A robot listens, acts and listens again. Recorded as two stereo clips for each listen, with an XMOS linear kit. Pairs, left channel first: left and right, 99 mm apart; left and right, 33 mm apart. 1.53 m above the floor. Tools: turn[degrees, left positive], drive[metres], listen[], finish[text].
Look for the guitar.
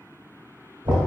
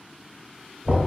Action: listen[]
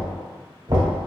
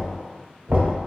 Action: listen[]
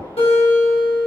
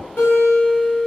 Thought: The guitar: about 75° left or 105° left.
Action: turn[75]
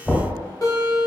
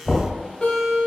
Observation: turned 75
Thought: So it is at 35° left.
Action: turn[35]
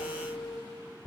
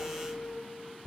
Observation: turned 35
Action: finish[Found it: a guitar, straight ahead, 1 to 2 m away.]